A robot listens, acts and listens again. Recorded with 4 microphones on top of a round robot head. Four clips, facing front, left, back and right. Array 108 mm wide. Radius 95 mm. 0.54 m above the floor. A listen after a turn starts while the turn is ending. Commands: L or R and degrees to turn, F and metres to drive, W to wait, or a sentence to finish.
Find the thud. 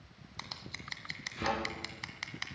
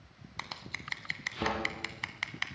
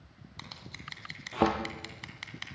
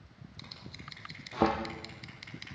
R145
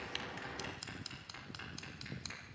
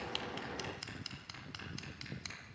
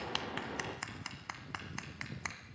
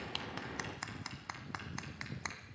Facing where the thud came from. I can't hear it now.